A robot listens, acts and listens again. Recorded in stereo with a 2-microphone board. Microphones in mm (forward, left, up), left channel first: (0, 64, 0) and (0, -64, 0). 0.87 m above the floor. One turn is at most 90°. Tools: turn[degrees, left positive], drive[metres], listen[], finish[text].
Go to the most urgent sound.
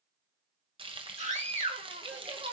Thought: The scream: about 65° right or 115° right.
Action: turn[-65]
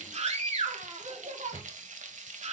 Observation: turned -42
Thought: So it is at 60° right.
Action: turn[-60]
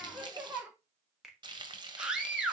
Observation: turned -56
Action: drive[1.0]
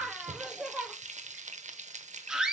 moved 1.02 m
Action: drive[1.0]
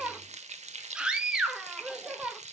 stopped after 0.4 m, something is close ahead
Thought: The scream is now 10° right.
Action: turn[-10]
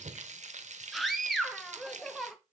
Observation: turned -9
Action: finish[Arrived at the scream, straight ahead.]